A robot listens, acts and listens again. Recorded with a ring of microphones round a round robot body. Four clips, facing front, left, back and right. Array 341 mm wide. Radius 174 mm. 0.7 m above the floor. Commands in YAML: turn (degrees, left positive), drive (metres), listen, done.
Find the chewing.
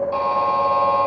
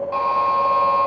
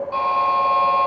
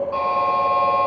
listen: true
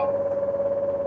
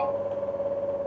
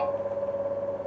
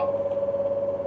listen: true
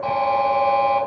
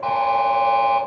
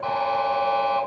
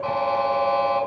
done: "I can't make out chewing to turn to."